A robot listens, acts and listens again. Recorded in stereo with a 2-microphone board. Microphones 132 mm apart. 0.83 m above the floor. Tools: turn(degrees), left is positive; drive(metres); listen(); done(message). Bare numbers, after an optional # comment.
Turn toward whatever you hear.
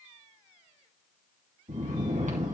# The snoring: about 70° right or 110° right.
turn(-70)
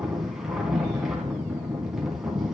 done("Found it: snoring, straight ahead.")